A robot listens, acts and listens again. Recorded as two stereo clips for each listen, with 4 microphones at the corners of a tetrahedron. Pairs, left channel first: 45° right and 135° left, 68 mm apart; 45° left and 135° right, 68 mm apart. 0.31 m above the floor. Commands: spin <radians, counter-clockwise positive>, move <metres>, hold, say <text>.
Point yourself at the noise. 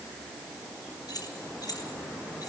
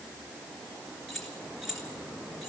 spin -0.87
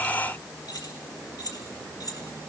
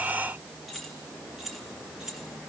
spin -0.96
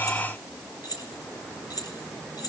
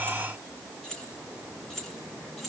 spin -0.79
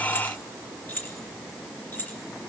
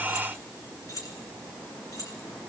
spin 0.26
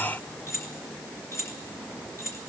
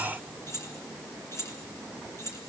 say Found it: keys jangling, straight ahead.